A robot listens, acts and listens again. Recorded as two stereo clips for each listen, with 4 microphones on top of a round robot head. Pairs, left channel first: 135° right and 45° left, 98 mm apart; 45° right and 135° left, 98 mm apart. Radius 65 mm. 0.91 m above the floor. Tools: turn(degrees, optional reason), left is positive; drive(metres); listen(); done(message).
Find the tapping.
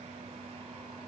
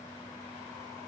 listen()
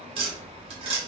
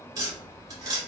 turn(degrees=75, reason="The tapping: 75° left.")
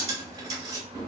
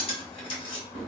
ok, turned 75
turn(degrees=-10, reason="The tapping is now 10° right.")
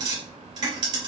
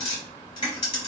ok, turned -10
done("Facing the tapping.")